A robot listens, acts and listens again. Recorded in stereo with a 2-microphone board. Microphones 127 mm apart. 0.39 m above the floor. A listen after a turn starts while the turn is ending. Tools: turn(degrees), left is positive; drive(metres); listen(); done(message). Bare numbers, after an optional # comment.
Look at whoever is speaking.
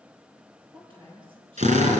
# The woman speaking: about 45° right or 135° right.
turn(-45)
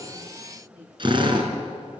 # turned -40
# So it is at 95° right.
turn(-95)
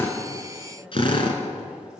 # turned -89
# Nothing new. It was at 10° right.
turn(-10)
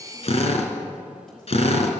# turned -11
listen()
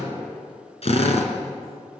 done("Facing where the woman speaking came from. I can't hear it now.")